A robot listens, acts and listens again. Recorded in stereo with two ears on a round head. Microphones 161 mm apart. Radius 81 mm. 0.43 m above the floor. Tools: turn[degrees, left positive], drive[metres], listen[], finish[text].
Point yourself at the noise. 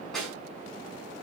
Action: turn[30]
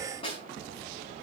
Thought: So it is at 145° left.
Action: turn[145]
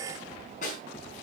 Thought: The snare drum is now 45° left.
Action: turn[45]
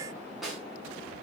Action: finish[Facing the snare drum, over 4 m away.]